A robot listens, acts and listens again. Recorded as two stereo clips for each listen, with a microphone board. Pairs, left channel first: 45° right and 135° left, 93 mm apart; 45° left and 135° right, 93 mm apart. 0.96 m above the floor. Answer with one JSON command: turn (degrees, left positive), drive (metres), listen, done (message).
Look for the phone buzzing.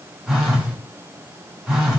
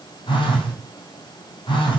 {"turn": 50}
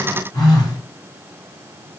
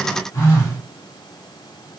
{"turn": -10}
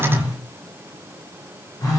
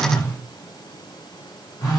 {"done": "Facing the phone buzzing."}